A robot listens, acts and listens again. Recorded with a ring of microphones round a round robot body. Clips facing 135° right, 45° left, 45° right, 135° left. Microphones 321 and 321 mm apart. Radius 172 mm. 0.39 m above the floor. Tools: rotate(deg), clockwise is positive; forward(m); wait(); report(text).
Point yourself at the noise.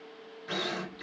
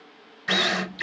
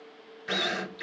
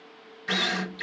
rotate(-55)
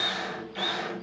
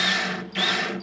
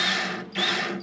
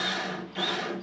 report("Facing the drill.")